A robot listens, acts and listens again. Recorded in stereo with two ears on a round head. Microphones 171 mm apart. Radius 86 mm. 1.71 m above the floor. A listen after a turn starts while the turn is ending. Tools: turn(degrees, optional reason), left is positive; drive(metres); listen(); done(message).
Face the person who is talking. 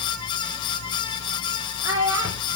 turn(degrees=-20, reason="The child speaking: about 20° right or 160° right.")
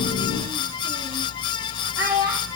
turn(degrees=-15, reason="The child speaking: about 15° right or 165° right.")
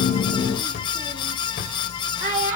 turn(degrees=-20, reason="The child speaking: about 20° right or 160° right.")
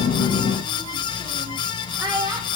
done("Facing the child speaking, 2 to 4 m away.")